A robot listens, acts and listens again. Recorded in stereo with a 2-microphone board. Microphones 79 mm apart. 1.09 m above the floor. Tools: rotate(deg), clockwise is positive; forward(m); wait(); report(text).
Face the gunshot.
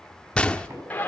rotate(-30)
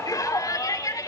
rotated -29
wait()
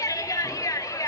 report("I heard a gunshot, but can't make it out now. It was about 15° right or 140° left.")